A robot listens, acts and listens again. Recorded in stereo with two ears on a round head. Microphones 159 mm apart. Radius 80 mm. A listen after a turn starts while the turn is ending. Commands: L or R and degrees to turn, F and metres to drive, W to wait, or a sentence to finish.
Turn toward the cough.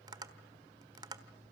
W
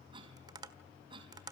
R30
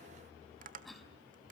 Found it: a cough, straight ahead, over 4 m away.